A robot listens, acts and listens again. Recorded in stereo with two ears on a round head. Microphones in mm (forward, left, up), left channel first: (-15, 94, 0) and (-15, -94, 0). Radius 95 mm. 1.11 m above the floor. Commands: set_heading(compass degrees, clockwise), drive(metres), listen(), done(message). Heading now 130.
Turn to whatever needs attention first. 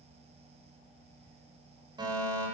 set_heading(150)
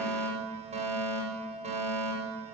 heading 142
set_heading(287)
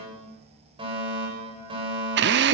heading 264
set_heading(289)
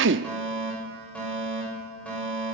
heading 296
done("Found it: a fire alarm, straight ahead.")